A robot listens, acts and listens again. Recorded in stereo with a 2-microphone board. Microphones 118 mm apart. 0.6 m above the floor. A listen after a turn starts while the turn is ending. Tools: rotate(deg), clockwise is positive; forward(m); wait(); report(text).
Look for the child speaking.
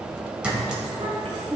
rotate(65)
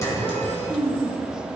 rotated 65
rotate(80)
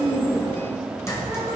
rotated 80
wait()
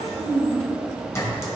rotate(25)
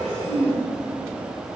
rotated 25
report("Facing the child speaking.")